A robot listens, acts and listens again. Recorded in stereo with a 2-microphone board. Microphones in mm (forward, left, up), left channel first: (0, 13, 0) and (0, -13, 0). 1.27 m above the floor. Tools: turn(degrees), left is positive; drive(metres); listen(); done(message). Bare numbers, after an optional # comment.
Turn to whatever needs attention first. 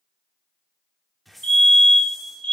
# The fire alarm: about 40° left or 140° left.
turn(40)
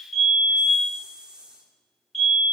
done("Facing the fire alarm.")